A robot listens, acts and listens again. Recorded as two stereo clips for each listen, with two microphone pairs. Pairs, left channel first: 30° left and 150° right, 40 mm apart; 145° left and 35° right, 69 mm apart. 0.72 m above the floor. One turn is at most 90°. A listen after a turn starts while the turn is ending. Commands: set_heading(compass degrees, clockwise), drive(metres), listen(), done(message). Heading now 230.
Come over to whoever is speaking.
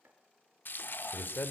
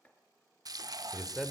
set_heading(175)
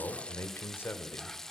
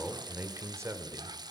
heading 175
set_heading(165)
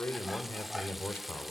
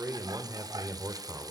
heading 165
drive(1.0)
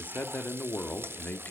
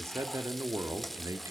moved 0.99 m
drive(1.0)
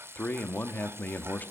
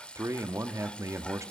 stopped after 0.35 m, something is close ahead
done("I am next to the man speaking.")